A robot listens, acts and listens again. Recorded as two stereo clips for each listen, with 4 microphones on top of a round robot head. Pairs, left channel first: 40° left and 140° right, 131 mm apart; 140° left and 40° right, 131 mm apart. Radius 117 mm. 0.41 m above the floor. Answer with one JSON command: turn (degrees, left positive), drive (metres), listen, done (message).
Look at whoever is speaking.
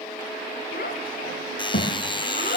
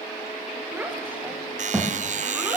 {"turn": 40}
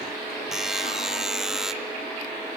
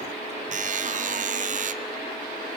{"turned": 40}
{"listen": true}
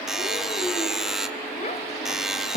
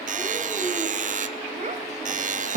{"done": "Found it: a child speaking, straight ahead, 2 to 4 m away."}